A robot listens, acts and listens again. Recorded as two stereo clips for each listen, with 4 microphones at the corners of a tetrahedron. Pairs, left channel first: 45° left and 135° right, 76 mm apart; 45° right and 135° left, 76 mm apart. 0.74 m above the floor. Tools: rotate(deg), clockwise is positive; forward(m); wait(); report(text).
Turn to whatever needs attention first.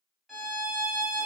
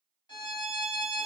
wait()
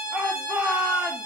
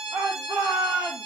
rotate(-150)
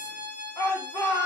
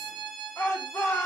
report("Facing the shout, 1 to 2 m away.")